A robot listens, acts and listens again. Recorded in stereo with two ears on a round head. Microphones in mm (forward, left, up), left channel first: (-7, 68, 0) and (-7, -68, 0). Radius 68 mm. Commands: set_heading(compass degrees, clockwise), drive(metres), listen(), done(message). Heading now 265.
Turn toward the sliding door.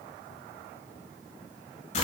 listen()
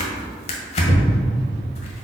listen()
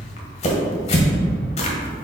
done("I can't make out a sliding door, only tearing paper.")